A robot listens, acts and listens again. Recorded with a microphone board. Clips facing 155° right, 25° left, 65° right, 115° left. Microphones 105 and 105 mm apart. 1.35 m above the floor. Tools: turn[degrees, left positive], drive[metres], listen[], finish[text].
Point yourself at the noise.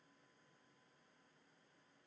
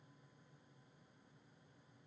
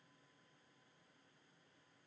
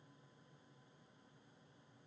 Action: listen[]
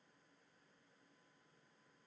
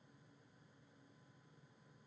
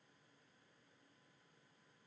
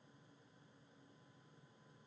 Action: listen[]
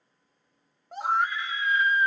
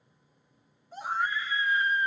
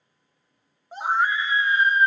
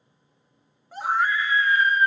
Thought: The scream: 135° right.
Action: turn[-135]
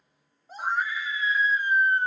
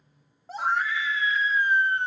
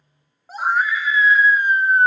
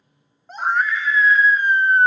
Thought: The scream is now 15° left.
Action: turn[15]
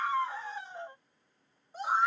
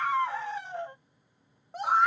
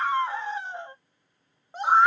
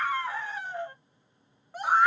Action: finish[Facing the scream, 1 to 2 m away.]